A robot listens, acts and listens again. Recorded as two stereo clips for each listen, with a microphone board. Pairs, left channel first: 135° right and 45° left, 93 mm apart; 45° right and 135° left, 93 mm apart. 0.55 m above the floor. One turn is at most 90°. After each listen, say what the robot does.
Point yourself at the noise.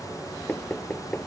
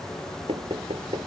Turn 90° left.
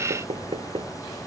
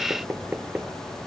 Turn 65° left.
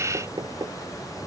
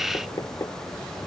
Found it: knocking, straight ahead.